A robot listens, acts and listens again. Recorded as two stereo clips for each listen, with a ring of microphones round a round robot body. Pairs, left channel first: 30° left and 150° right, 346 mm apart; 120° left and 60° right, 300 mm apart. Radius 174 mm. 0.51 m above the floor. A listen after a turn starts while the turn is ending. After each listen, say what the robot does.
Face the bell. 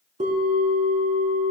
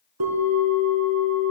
Turn 80° right.
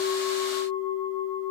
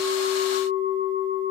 Turn 10° left.
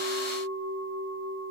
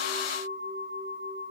Found it: a bell, straight ahead, 2 to 4 m away.